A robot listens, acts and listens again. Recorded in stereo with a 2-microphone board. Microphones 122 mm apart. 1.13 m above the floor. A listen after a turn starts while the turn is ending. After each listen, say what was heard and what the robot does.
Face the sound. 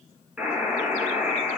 Turn 30° right.
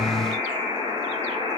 So it is at 140° right. Turn 140° right.
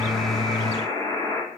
The buzzer is now 25° left. Turn 25° left.
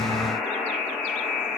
Facing the buzzer.